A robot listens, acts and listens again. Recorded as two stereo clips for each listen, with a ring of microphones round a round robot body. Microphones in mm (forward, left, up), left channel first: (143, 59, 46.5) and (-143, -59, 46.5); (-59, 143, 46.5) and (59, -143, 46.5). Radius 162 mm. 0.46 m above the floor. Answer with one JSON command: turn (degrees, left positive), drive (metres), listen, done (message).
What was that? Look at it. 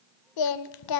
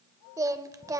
{"turn": 15}
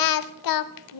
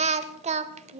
{"done": "Facing the singing."}